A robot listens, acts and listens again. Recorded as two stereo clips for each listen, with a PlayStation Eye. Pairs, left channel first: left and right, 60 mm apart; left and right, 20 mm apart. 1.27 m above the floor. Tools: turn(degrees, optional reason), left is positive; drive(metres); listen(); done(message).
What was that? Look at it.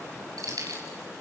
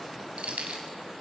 turn(degrees=-90)
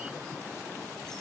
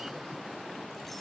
listen()
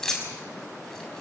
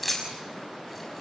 turn(degrees=10, reason="The keys jangling is now 10° left.")
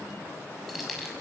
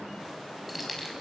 done("Facing the keys jangling, over 4 m away.")